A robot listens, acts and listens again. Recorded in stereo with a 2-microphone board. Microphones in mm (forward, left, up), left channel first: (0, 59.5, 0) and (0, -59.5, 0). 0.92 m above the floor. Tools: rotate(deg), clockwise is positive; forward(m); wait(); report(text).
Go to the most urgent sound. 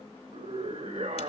rotate(90)
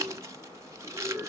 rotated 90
rotate(10)
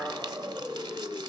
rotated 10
forward(1.0)
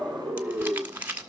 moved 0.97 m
forward(1.0)
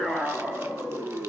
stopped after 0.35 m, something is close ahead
report("Arrived at the scream, straight ahead.")